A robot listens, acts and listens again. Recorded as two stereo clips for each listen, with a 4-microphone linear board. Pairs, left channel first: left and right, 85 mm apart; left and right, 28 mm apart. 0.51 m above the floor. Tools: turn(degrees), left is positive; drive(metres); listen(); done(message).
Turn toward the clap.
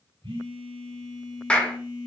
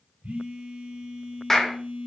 turn(degrees=30)
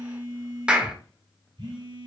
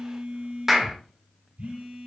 turn(degrees=-15)
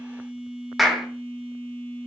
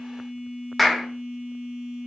done("Found it: a clap, straight ahead.")